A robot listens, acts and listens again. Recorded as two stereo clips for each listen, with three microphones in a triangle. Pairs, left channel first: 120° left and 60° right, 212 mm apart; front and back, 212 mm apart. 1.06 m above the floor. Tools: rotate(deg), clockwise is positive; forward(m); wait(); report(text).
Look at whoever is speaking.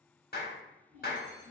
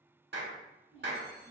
rotate(115)
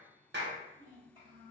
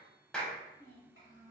report("Found it: a child speaking, straight ahead, 1 to 2 m away.")